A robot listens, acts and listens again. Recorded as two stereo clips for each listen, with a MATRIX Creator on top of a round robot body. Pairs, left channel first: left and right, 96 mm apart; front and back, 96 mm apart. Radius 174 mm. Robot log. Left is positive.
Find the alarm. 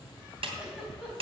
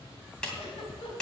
cmd idle
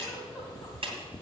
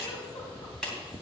cmd idle
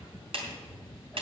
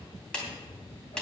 end: I can't make out an alarm to turn to.